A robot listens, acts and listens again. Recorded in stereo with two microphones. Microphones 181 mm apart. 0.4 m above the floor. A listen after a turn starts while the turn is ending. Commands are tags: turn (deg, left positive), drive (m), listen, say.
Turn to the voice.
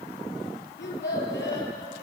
<turn deg="90"/>
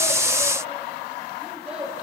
<turn deg="-10"/>
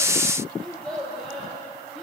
<say>Facing the child speaking, over 4 m away.</say>